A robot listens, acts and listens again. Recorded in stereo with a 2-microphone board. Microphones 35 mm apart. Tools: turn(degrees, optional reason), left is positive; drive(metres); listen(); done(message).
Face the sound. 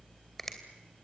turn(degrees=30)
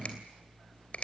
turn(degrees=140, reason="So it is at 140° left.")
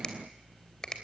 turn(degrees=25, reason="The finger snap is now 25° left.")
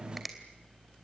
done("Found it: a finger snap, straight ahead, 2 to 4 m away.")